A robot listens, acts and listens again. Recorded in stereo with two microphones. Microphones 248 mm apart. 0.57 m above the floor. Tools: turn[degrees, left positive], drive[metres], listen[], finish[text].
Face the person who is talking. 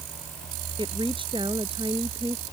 Thought: The woman speaking: about 20° right or 160° right.
Action: turn[-20]
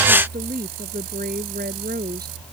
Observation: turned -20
Thought: So it is at 140° right.
Action: turn[-140]
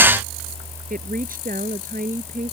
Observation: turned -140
Thought: The woman speaking is now 35° right.
Action: turn[-35]
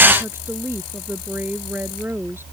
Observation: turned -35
Thought: The woman speaking is now 10° right.
Action: turn[-10]
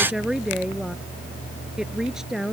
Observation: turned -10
Action: finish[Found it: a woman speaking, straight ahead.]